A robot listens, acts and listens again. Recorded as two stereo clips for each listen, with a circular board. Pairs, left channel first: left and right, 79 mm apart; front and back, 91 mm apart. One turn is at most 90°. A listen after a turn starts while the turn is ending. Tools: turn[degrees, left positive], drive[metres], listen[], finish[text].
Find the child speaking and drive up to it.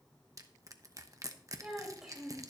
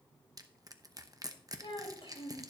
Action: drive[1.0]
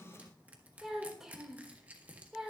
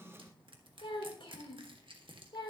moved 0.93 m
Action: drive[1.0]
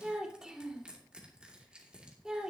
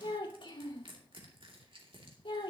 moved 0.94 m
Thought: The child speaking is now 10° right.
Action: turn[-10]
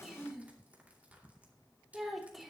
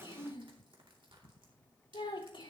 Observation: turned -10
Action: drive[1.0]
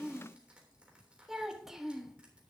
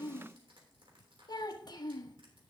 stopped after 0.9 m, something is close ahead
Action: finish[Arrived at the child speaking, straight ahead.]